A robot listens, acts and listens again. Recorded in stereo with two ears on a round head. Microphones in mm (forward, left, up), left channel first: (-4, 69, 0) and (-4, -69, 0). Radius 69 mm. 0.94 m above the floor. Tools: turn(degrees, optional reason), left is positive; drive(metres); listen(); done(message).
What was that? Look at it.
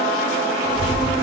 turn(degrees=-60, reason="The child speaking: about 60° right or 120° right.")
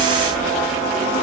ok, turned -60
turn(degrees=-65, reason="So it is at 65° right.")
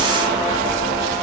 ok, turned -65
turn(degrees=-25, reason="The child speaking is now 25° right.")
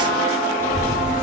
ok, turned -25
turn(degrees=15, reason="The child speaking is now 15° left.")
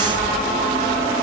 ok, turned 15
done("Facing the child speaking.")